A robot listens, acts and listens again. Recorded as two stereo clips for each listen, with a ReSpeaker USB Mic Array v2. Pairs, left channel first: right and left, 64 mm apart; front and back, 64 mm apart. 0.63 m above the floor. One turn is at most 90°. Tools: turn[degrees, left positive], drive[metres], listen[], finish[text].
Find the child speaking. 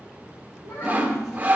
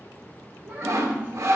Thought: The child speaking: 115° right.
Action: turn[-90]
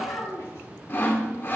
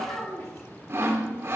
Thought: The child speaking is now 45° right.
Action: turn[-45]
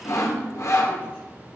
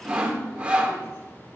Action: listen[]
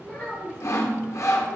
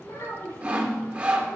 Thought: The child speaking is now 15° right.
Action: turn[-15]
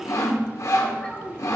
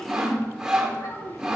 Thought: The child speaking is now 10° right.
Action: turn[-10]
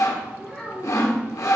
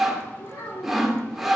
Action: finish[Found it: a child speaking, straight ahead.]